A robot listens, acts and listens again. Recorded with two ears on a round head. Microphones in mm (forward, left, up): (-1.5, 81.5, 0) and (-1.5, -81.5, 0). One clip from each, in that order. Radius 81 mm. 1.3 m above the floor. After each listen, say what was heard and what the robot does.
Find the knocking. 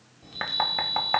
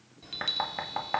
Turn 30° left.
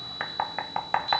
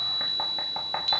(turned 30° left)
So it is at 140° left. Turn 140° left.
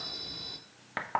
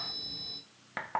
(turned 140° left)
Facing the knocking, 1 to 2 m away.